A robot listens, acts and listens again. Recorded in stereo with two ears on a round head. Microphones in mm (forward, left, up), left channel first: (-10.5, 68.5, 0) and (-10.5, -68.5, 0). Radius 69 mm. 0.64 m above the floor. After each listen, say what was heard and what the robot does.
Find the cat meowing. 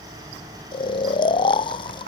Keep listening.
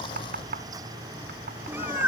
Turn 30° right.
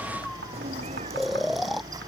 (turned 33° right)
So it is at 135° right. Turn 135° right.
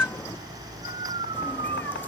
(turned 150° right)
The cat meowing is now 10° left. Turn 10° left.
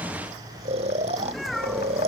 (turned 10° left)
Facing the cat meowing.